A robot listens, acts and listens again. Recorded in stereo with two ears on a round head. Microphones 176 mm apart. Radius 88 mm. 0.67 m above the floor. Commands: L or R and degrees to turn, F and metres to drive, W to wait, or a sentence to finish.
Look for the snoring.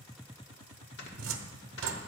L65
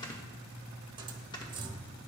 L25
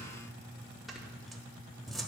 Found it: snoring, straight ahead, 1 to 2 m away.